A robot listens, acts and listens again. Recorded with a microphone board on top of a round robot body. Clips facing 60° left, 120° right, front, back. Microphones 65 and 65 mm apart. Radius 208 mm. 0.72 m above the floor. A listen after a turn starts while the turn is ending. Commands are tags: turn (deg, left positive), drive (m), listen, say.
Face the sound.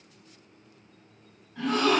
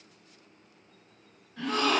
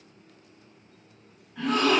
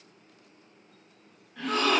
<turn deg="90"/>
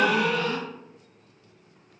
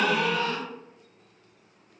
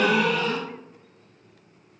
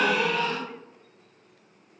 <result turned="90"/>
<say>Found it: a gasp, straight ahead, 1 to 2 m away.</say>